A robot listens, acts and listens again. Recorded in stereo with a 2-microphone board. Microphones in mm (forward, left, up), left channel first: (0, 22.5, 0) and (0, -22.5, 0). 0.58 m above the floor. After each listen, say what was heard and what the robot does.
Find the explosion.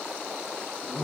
Keep listening.
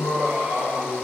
Keep listening.
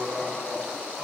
I can't make out an explosion, only laughter.